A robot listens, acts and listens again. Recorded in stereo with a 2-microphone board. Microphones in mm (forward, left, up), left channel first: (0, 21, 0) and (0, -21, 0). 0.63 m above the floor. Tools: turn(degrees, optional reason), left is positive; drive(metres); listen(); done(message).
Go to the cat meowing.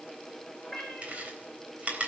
turn(degrees=30)
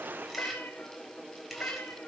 turn(degrees=135, reason="So it is at 135° left.")
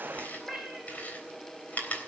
drive(metres=1.0)
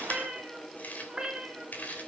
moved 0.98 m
turn(degrees=-15, reason="The cat meowing is now 15° right.")
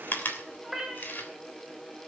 drive(metres=1.0)
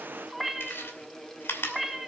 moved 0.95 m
drive(metres=1.0)
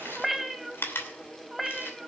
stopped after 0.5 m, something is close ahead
done("Arrived at the cat meowing, straight ahead.")